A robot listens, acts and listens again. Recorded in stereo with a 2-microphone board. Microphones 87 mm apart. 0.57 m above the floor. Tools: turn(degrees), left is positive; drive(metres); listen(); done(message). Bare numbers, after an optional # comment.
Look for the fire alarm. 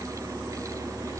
listen()
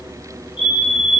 # The fire alarm: about 75° left or 105° left.
turn(75)
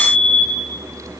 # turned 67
# So it is at 30° left.
turn(30)
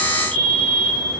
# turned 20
# The fire alarm is now 10° left.
turn(10)
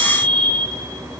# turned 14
done("Found it: a fire alarm, straight ahead, over 4 m away.")